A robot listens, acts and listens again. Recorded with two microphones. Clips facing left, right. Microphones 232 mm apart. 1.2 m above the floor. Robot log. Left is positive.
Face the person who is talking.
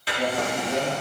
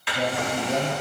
note: The man speaking: about 45° right or 135° right.
cmd yaw -45
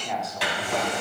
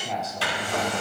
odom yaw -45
end: Found it: a man speaking, straight ahead, 2 to 4 m away.